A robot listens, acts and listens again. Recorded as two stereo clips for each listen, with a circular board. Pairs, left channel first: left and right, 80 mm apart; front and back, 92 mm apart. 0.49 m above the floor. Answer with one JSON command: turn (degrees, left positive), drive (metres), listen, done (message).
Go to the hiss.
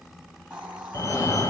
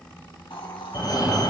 {"turn": -15}
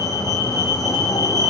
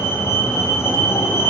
{"listen": true}
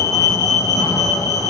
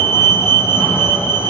{"listen": true}
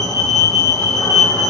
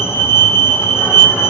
{"done": "Facing where the hiss came from. I can't hear it now. I did not reach it."}